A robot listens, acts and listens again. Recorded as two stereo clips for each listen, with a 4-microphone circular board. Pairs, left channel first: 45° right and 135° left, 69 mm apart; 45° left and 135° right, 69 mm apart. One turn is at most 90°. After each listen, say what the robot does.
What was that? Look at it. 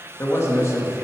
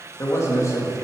Facing the man speaking, 1 to 2 m away.